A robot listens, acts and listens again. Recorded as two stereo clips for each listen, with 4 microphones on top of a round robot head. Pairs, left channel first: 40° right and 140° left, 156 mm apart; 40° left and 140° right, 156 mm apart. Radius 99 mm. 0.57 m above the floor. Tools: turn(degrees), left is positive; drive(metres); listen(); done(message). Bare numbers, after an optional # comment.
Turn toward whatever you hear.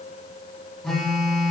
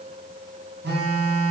# The phone buzzing: 125° right.
turn(-125)
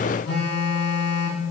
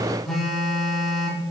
# The phone buzzing is now 50° right.
turn(-50)
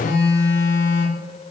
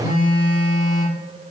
done("Found it: a phone buzzing, straight ahead.")